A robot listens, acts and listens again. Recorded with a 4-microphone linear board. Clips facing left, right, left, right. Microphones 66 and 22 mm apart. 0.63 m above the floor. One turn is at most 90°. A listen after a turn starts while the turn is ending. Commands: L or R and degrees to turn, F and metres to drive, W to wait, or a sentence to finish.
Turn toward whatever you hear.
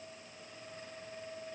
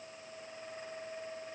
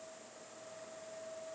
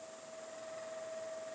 W
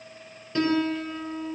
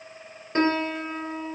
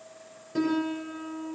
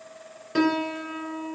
R40
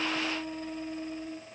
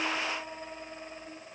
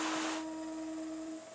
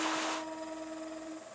Found it: a piano, straight ahead, 2 to 4 m away.